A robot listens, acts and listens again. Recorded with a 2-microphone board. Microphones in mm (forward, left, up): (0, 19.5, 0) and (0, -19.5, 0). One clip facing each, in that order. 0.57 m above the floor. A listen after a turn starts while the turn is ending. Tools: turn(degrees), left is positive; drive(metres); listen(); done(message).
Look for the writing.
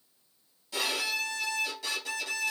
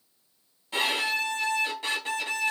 listen()
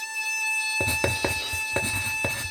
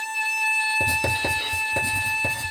turn(degrees=45)
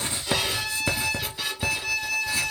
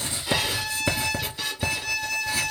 done("Found it: writing, straight ahead.")